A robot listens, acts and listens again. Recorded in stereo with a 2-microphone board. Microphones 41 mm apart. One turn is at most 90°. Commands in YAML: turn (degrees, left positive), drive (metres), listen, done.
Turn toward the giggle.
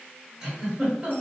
turn: -30
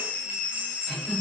turn: 15
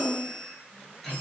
done: "Facing the giggle."